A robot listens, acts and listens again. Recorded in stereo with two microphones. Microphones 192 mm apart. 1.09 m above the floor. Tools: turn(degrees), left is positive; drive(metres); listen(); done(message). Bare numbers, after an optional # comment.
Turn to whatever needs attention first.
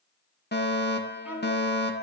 # The fire alarm: about 60° left or 120° left.
turn(60)
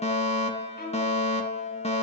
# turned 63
# So it is at 40° left.
turn(40)
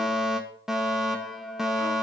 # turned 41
done("Found it: a fire alarm, straight ahead.")